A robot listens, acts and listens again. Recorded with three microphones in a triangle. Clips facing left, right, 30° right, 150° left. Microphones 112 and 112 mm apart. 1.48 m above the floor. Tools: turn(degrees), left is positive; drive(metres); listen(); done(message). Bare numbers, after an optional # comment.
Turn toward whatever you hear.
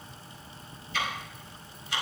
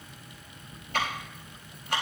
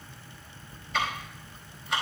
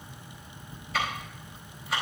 # The ticking: 125° right.
turn(-125)
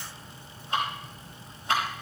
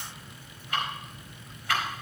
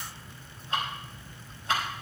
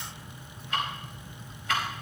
# The ticking is now 25° left.
turn(25)
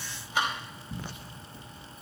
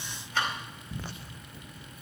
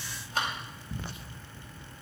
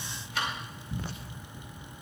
# The ticking is now 10° left.
turn(10)
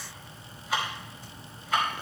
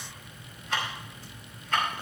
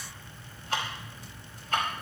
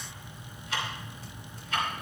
done("Found it: ticking, straight ahead.")